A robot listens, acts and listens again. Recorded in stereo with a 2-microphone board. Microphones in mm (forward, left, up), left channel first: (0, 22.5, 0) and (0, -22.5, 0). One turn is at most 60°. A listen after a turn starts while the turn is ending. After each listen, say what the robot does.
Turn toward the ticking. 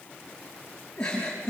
Keep listening.
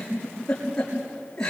Keep listening.
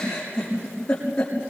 I can't make out ticking to turn to.